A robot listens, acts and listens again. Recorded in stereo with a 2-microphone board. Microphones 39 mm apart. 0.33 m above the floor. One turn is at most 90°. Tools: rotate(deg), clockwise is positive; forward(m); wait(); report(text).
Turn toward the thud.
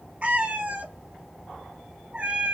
wait()
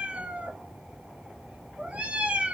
wait()
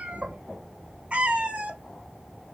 report("I can't make out a thud, only a cat meowing.")